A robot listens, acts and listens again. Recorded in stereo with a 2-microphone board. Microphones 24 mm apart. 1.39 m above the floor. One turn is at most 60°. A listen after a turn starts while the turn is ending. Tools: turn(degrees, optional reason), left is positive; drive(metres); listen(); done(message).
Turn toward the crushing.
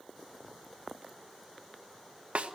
listen()
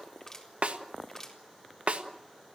turn(degrees=20, reason="The crushing: about 20° left or 160° left.")
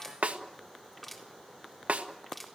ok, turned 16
done("Facing the crushing.")